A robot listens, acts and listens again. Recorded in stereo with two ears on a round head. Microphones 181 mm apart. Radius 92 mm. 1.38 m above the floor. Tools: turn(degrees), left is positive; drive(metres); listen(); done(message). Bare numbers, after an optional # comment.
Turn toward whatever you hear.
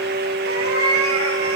turn(-90)
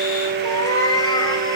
# So it is at 20° left.
turn(20)
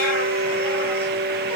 listen()
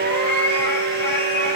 # The cat meowing is now 10° left.
turn(10)
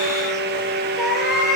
done("Facing the cat meowing.")